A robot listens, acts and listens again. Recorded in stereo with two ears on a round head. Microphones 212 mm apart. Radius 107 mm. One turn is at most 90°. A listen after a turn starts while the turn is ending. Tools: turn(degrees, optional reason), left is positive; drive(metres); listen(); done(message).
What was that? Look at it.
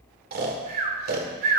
turn(degrees=-40, reason="The snoring: about 40° right or 140° right.")
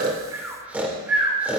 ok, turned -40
turn(degrees=-10, reason="So it is at 10° right.")
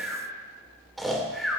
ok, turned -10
done("Facing the snoring, 2 to 4 m away.")